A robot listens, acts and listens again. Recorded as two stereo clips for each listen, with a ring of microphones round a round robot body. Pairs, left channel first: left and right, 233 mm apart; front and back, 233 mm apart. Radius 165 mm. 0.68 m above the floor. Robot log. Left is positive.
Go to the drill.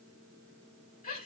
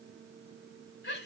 cmd idle
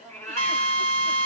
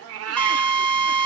note: The drill: 85° left.
cmd yaw +85
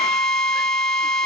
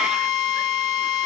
cmd fwd 1.0
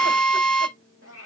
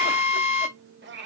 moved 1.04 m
cmd fwd 1.0
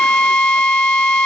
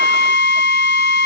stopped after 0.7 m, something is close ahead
note: The drill is now 15° left.
cmd yaw +15
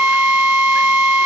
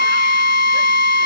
end: I am next to the drill.